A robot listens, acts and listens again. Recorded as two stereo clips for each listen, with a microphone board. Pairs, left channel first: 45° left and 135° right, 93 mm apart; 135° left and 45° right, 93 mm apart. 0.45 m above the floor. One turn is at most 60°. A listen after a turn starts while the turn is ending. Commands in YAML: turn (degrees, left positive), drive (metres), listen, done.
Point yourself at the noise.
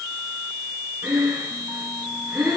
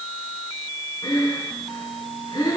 turn: 60
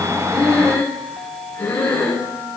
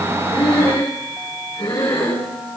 turn: 60
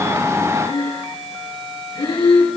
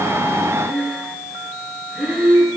turn: 55
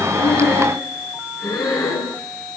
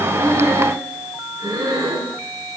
done: "Found it: breathing, straight ahead, over 4 m away."